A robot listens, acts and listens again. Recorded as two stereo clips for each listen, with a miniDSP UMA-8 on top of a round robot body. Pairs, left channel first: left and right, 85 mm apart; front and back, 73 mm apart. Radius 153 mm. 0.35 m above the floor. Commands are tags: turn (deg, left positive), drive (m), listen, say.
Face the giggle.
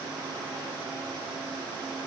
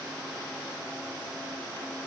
<listen/>
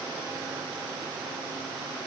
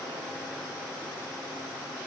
<listen/>
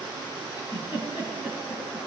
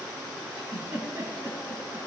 <turn deg="115"/>
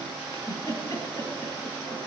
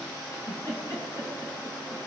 <turn deg="45"/>
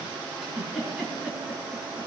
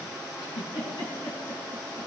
<say>Found it: a giggle, straight ahead.</say>